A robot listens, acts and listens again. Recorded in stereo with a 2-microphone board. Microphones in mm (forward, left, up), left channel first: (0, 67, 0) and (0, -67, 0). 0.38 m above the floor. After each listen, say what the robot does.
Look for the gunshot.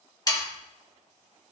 Keep listening.
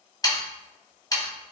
Keep listening.
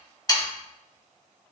I can't make out a gunshot, only sawing.